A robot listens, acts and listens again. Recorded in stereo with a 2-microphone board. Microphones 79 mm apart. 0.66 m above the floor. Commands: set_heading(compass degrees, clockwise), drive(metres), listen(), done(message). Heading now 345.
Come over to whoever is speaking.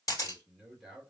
set_heading(315)
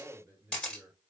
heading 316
set_heading(346)
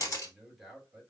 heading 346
drive(1.0)
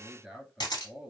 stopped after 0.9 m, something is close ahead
done("Arrived at the man speaking, straight ahead.")